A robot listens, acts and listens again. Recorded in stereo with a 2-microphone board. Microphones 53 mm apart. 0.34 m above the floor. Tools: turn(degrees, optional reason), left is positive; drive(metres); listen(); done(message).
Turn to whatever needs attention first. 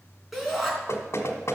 turn(degrees=-30)
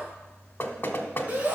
turn(degrees=-145, reason="So it is at 145° right.")
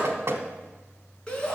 turn(degrees=20, reason="The shout is now 20° left.")
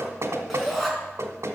done("Found it: a shout, straight ahead, 2 to 4 m away.")